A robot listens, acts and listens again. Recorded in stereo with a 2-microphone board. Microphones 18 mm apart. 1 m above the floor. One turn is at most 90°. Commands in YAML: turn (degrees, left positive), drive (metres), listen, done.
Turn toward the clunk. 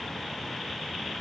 listen: true
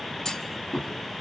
turn: 35
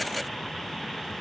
listen: true
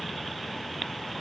done: "I heard a clunk, but can't make it out now. It was about straight ahead or 110° left."